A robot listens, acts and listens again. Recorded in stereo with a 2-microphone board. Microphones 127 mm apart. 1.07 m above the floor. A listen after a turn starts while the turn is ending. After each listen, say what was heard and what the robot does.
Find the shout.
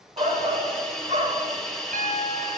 The shout: about 50° right or 130° right. Turn 50° right.
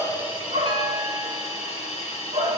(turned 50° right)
So it is at 75° right. Turn 75° right.
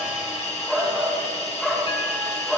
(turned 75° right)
Facing the shout, 1 to 2 m away.